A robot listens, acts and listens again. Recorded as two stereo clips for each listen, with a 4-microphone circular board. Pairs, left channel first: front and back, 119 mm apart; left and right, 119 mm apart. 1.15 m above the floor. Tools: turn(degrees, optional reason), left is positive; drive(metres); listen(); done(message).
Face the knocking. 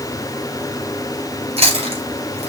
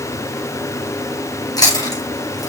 listen()
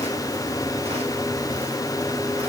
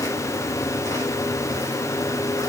listen()
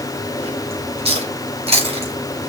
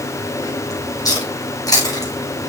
done("I can't make out knocking, only chewing.")